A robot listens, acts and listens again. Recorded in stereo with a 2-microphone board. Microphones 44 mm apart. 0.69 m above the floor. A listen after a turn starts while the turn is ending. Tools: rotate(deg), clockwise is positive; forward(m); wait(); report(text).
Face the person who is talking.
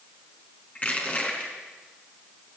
wait()
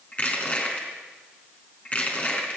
wait()
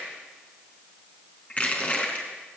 report("I can't make out anyone speaking, only crushing.")